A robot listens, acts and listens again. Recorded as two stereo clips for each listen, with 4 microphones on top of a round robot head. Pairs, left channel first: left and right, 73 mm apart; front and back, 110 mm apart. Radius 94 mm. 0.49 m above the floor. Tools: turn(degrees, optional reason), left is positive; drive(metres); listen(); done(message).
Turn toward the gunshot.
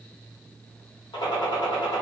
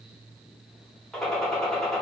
turn(degrees=80, reason="The gunshot: 80° left.")
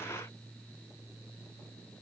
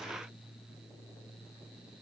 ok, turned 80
done("Facing where the gunshot came from. I can't hear it now.")